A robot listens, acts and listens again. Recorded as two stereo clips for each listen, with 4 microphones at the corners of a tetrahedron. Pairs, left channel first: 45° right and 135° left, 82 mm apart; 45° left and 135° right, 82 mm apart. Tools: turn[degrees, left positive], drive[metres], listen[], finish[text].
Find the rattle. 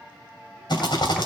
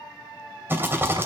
Thought: The rattle: 70° right.
Action: turn[-70]
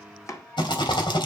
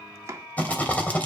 Thought: The rattle is now 25° right.
Action: turn[-25]
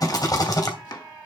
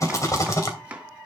Action: finish[Facing the rattle.]